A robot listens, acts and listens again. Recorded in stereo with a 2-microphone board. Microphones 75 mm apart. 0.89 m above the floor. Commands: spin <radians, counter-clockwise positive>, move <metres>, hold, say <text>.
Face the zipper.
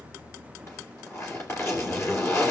spin 0.70
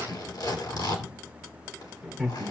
spin 1.83
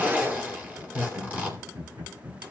spin -0.35
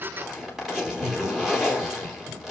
say Found it: a zipper, straight ahead.